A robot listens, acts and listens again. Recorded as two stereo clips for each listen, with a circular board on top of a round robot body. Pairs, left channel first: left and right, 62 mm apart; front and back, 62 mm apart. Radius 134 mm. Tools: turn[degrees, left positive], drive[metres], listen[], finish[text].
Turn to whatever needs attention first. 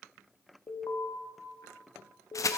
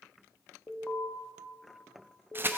Thought: The alarm: 70° left.
Action: turn[70]
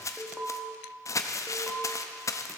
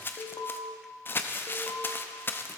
Action: finish[Found it: an alarm, straight ahead.]